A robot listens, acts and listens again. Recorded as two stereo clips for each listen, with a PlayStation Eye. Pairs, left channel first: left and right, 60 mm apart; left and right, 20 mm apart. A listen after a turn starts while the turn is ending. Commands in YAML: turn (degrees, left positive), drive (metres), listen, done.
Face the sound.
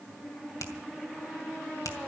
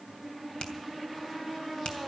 turn: 65
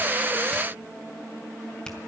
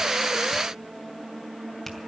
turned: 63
turn: 15
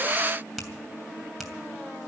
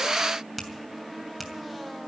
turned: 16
done: "Found it: a finger snap, straight ahead, 2 to 4 m away."